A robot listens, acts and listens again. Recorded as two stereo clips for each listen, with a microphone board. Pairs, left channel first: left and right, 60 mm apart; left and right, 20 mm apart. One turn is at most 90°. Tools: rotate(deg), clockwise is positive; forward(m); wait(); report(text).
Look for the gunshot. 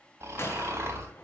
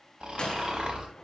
rotate(-45)
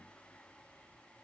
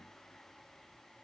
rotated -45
wait()
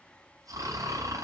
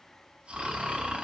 report("I heard a gunshot, but can't make it out now. It was about straight ahead or 90° left.")